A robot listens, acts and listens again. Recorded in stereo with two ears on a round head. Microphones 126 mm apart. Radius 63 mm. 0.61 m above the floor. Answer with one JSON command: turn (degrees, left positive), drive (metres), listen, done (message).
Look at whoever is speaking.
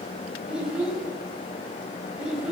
{"turn": -30}
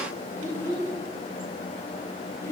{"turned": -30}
{"turn": 20}
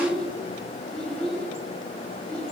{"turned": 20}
{"done": "Facing the child speaking."}